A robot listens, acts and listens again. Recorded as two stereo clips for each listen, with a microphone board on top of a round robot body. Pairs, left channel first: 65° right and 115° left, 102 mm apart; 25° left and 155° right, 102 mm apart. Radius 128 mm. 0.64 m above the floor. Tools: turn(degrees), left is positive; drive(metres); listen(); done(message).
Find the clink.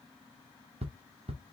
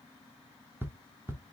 listen()
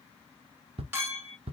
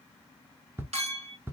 turn(degrees=-175)
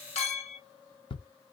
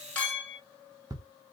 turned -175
turn(degrees=-55)
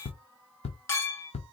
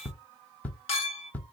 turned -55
done("Found it: a clink, straight ahead, 2 to 4 m away.")